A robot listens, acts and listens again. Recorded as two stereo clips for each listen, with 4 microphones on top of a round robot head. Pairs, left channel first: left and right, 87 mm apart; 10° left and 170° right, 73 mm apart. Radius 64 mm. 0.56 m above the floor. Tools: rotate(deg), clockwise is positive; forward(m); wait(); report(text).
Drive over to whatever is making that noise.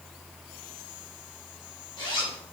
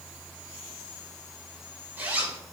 rotate(-125)
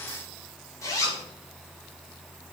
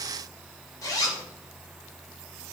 rotate(-40)
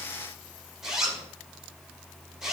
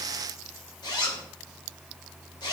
forward(1.0)
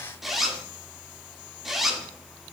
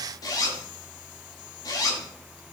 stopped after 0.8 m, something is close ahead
report("Arrived at the zipper, straight ahead.")